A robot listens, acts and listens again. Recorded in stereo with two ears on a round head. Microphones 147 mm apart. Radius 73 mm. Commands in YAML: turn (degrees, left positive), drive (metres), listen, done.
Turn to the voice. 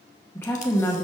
turn: 30
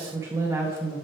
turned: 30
turn: -20
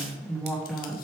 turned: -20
done: "Facing the woman speaking, 1 to 2 m away."